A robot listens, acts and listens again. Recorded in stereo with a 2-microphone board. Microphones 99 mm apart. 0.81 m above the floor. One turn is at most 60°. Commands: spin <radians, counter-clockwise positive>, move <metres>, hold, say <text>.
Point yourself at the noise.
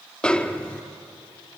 spin 0.52
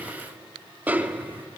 spin -0.26
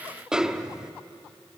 say Found it: a snare drum, straight ahead, under 1 m away.